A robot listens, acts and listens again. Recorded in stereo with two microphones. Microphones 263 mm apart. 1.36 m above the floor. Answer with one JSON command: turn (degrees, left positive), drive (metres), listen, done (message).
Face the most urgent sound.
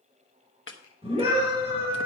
{"turn": -20}
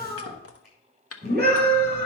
{"turn": -140}
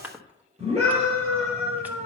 {"turn": -25}
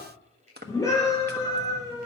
{"turn": 10}
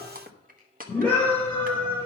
{"done": "Found it: a scream, straight ahead."}